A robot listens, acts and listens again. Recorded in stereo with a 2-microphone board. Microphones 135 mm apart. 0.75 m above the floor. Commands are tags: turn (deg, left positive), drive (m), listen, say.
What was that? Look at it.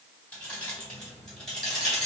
<turn deg="30"/>
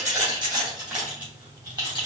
<turn deg="-35"/>
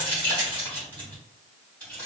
<turn deg="10"/>
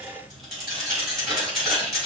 <say>Facing the keys jangling.</say>